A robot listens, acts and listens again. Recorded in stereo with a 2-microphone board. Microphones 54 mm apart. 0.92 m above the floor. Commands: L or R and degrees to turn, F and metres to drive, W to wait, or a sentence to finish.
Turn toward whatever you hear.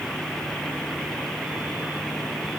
W
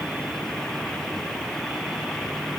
W
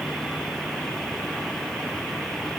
I can't make out anything.